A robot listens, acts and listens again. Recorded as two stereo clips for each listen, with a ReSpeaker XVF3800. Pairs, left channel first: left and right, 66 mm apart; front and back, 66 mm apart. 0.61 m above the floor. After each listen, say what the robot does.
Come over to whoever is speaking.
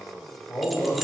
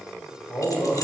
Turn 35° left.
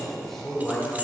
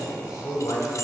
Drive 1.0 m forward.
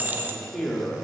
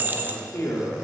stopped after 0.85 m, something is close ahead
Turn 10° left.
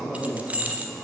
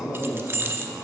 Arrived at the man speaking, straight ahead.